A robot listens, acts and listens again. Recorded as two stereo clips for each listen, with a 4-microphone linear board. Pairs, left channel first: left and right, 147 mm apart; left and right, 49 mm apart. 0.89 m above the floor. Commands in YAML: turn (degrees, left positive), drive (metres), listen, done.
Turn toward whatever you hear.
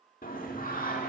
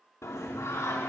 turn: 90
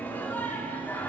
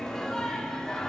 turn: 15
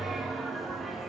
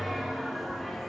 done: "Facing the singing, 1 to 2 m away."